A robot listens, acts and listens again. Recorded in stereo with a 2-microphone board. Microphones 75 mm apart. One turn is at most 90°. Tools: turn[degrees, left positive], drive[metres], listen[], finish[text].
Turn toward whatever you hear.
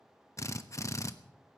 Thought: The drill: about 40° left or 140° left.
Action: turn[40]
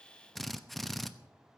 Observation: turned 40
Action: finish[Found it: a drill, straight ahead, under 1 m away.]